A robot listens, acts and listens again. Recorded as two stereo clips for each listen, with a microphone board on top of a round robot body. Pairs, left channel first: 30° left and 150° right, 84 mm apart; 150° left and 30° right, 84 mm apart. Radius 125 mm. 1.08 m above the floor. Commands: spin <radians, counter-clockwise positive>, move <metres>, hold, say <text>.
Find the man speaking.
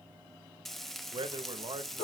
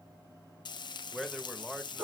spin -2.09
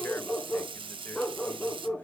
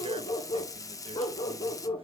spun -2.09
hold
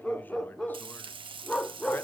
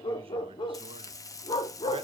hold
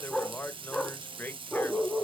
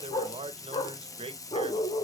spin -0.70
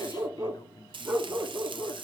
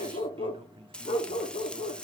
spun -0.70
hold
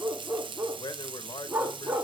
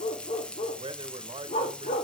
spin -0.17
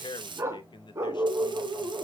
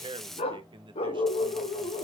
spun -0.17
say Facing the man speaking.